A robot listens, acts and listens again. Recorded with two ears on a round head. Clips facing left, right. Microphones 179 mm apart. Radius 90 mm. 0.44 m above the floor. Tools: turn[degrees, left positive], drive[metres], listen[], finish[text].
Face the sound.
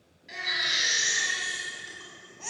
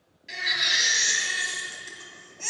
Thought: The baby crying: about 35° right or 145° right.
Action: turn[-35]
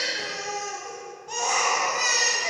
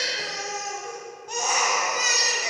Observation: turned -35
Action: finish[Found it: a baby crying, straight ahead.]